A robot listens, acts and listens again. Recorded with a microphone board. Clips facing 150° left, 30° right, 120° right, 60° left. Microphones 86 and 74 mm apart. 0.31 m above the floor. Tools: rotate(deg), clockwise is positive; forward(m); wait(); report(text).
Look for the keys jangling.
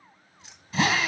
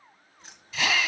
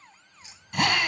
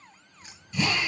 rotate(-20)
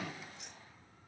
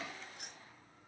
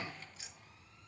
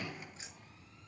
report("Facing the keys jangling.")